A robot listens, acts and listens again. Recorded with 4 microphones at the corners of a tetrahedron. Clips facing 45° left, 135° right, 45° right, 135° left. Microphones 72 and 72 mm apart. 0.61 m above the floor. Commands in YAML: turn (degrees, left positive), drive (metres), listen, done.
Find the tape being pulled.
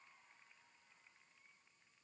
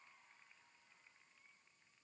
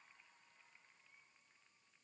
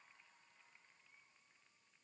listen: true
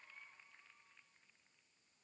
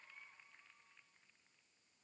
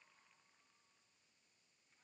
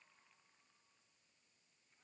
listen: true
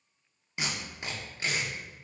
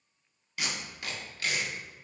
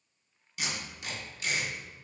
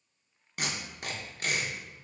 turn: 110
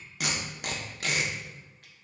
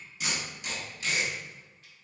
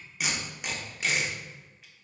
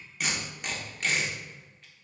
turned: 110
turn: 40
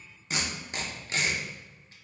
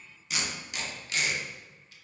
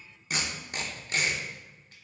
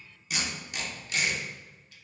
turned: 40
done: "Facing the tape being pulled."